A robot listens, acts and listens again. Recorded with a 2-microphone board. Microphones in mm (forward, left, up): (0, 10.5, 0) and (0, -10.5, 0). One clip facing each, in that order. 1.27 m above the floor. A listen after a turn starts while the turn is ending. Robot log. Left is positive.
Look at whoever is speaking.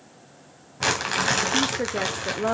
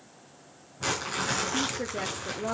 note: The woman speaking: about 35° left or 145° left.
cmd yaw +35
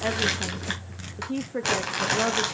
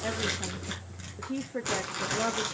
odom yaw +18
note: So it is at 15° left.
cmd yaw +15
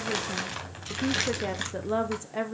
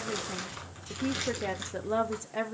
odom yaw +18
end: Facing the woman speaking, under 1 m away.